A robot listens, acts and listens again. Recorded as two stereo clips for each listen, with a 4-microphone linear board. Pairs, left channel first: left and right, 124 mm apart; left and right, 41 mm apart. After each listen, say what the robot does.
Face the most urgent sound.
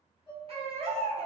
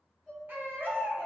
Turn 55° right.
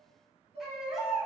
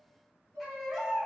Found it: a baby crying, straight ahead, under 1 m away.